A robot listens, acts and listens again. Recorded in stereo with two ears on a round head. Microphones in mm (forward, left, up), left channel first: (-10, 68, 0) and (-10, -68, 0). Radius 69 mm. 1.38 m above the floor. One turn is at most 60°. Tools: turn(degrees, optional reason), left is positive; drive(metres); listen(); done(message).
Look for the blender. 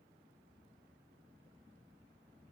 listen()
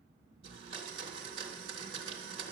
turn(degrees=-35, reason="The blender: about 35° right or 145° right.")
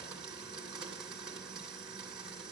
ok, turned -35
done("Facing the blender, 2 to 4 m away.")